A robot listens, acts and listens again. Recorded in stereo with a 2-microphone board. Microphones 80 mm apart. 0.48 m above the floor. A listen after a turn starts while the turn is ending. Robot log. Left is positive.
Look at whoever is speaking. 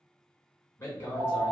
note: The man speaking: about 30° left or 150° left.
cmd yaw +30
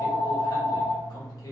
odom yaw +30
cmd idle
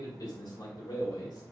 note: So it is at 110° left.
cmd yaw +110
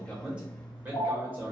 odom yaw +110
note: The man speaking is now 30° right.
cmd yaw -30
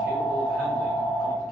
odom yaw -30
cmd idle
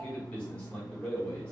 note: The man speaking is now 20° left.
cmd yaw +20
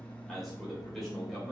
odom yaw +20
end: Found it: a man speaking, straight ahead, 1 to 2 m away.